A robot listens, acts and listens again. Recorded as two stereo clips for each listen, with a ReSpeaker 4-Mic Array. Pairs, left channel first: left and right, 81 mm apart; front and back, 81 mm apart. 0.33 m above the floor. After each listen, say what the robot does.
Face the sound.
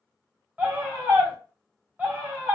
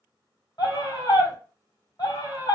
Turn 25° right.
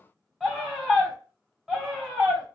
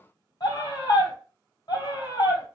Facing the scream.